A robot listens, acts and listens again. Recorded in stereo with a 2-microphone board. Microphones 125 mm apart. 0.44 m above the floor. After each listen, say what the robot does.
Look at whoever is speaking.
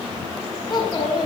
Turn 35° left.
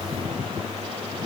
Keep listening.
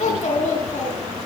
Turn 110° left.
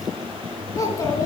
Turn 25° left.
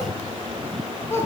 Turn 20° left.
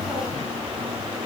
Keep listening.
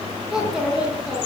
Facing the child speaking.